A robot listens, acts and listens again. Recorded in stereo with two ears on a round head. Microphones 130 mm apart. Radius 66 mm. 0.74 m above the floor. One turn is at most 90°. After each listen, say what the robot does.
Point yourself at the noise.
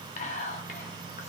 Turn 50° left.
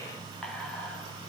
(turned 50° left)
Keep listening.
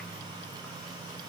Keep listening.
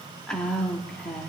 Facing the whispering.